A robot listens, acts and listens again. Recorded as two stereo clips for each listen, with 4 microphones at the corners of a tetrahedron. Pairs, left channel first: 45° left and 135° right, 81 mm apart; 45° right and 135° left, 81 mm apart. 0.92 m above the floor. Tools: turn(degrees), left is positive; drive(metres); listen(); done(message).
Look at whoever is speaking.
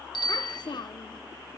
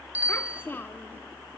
turn(degrees=20)
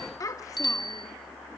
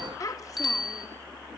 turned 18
done("Facing the child speaking.")